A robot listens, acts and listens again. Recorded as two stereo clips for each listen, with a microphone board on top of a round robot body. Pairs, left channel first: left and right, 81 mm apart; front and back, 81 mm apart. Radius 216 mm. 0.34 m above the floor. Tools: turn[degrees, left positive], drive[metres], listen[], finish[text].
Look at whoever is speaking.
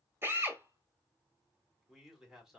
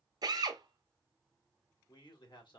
Action: finish[Found it: a man speaking, straight ahead.]